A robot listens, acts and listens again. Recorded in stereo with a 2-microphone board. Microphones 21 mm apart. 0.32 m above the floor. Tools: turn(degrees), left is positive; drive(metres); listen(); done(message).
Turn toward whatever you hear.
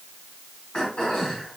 turn(degrees=55)
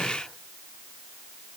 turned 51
listen()
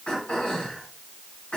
turn(degrees=65)
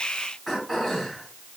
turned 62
done("Found it: throat clearing, straight ahead, 2 to 4 m away.")